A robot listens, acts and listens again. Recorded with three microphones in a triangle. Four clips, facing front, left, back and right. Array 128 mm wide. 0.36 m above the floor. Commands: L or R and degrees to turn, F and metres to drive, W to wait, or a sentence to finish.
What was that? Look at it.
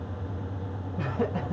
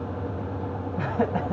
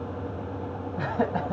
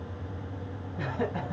L140
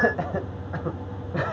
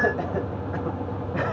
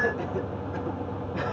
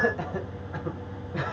L50
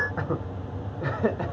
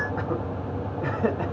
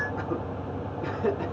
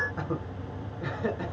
L50
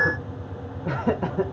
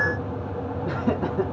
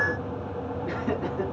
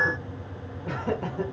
L20
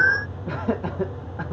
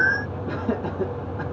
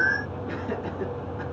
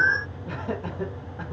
Facing the laughter.